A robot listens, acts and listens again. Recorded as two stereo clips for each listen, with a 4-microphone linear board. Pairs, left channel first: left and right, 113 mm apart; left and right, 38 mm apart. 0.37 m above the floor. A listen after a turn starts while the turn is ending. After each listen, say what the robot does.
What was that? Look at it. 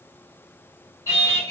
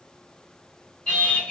Turn 30° left.
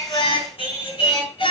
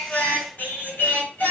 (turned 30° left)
Turn 120° left.
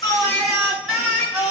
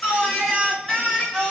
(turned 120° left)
Turn 10° right.
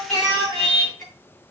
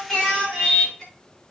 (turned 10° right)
Found it: singing, straight ahead.